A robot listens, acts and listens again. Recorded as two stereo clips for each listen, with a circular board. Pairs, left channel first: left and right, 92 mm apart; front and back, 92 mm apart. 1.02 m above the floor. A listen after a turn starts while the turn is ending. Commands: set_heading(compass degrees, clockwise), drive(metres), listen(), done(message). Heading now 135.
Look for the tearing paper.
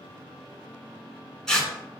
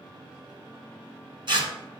set_heading(320)
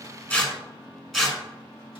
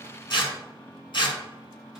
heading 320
done("Found it: tearing paper, straight ahead.")